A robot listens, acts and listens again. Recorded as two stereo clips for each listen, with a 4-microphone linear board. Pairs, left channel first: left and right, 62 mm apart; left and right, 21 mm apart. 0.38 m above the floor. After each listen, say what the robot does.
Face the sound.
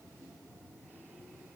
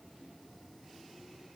Keep listening.
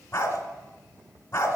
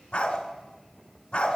Turn 40° left.
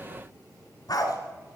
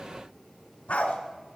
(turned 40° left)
Turn 95° left.
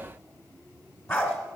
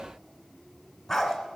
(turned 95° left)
Turn 25° left.
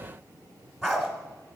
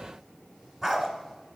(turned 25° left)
Found it: a dog barking, straight ahead.